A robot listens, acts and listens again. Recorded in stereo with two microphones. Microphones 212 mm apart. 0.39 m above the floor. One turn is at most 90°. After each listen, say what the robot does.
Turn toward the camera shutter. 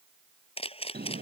Turn 25° left.
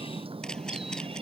Keep listening.
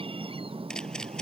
Keep listening.
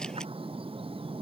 I heard a camera shutter, but can't make it out now. It was about straight ahead or 130° left.